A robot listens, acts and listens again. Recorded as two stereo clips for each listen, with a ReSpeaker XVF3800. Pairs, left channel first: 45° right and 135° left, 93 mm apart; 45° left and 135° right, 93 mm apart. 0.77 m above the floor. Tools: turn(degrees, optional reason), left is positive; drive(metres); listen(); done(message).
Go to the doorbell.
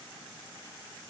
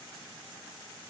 listen()
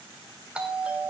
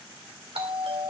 turn(degrees=-145, reason="The doorbell: 145° right.")
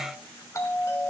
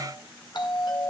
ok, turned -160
turn(degrees=15, reason="The doorbell is now 15° left.")
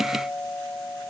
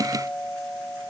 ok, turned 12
drive(metres=1.0)
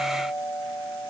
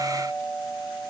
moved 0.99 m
drive(metres=1.0)
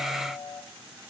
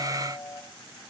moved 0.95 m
drive(metres=1.0)
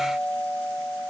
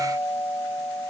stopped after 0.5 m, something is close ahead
turn(degrees=10, reason="The doorbell is now 10° left.")
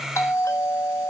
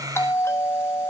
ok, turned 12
done("Arrived at the doorbell, straight ahead.")